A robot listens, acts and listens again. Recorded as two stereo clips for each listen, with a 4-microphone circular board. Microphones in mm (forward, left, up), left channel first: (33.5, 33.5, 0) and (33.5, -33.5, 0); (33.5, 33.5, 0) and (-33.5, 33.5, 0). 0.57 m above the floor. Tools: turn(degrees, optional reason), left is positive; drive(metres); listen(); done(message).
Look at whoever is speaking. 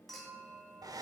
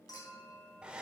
listen()
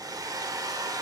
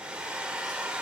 listen()
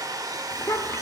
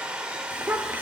turn(degrees=125, reason="The child speaking: 125° left.")
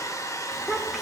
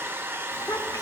done("Facing the child speaking.")